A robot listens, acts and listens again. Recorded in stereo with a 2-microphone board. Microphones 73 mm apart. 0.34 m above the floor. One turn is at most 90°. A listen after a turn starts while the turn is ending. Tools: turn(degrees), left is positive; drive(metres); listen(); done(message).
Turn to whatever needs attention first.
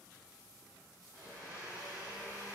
listen()
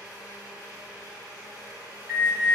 turn(degrees=-30)
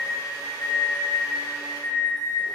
turn(degrees=25)
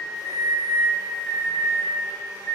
turn(degrees=15)
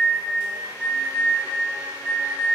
done("Facing the alarm.")